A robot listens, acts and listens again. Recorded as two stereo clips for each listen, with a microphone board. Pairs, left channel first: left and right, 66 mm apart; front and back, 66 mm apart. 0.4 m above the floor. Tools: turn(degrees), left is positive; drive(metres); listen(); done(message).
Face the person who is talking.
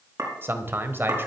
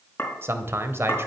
turn(degrees=-140)
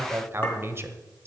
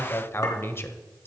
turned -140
turn(degrees=-45)
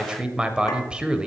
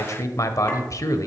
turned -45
turn(degrees=-15)
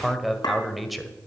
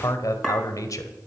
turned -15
done("Found it: a man speaking, straight ahead, 1 to 2 m away.")